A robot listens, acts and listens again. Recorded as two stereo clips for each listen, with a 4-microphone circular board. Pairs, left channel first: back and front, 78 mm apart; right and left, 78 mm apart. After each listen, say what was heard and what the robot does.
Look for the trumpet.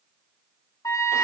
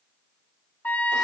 The trumpet: 150° right. Turn 150° right.
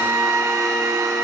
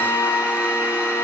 The trumpet is now 50° right. Turn 50° right.
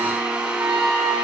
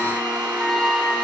Facing the trumpet.